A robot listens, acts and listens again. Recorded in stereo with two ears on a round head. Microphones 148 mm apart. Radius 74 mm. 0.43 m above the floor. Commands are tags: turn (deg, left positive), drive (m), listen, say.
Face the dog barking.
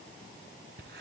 <listen/>
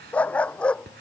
<turn deg="30"/>
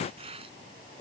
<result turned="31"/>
<listen/>
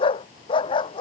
<turn deg="150"/>
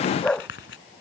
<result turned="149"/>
<say>Found it: a dog barking, straight ahead.</say>